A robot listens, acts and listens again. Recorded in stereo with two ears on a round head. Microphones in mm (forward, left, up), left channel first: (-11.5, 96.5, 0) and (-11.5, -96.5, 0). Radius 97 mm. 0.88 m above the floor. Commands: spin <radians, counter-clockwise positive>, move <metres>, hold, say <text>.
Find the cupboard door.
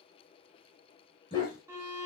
hold
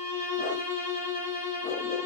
hold
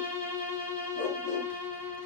say I can't make out a cupboard door to turn to.